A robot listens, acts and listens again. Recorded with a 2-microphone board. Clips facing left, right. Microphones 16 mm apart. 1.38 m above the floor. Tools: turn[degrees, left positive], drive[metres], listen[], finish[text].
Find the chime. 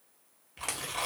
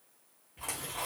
Action: listen[]
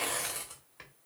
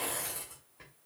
Action: listen[]
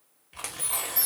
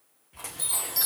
Thought: The chime: about 60° right or 120° right.
Action: turn[-60]
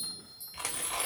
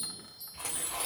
Action: listen[]
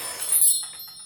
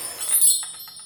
Thought: So it is at 55° right.
Action: turn[-55]
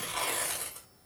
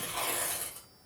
Action: listen[]
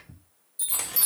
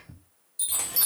Thought: The chime is now 25° right.
Action: turn[-25]
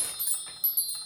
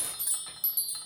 Thought: The chime is now 10° right.
Action: turn[-10]
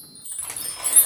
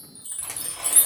Action: finish[Found it: a chime, straight ahead, under 1 m away.]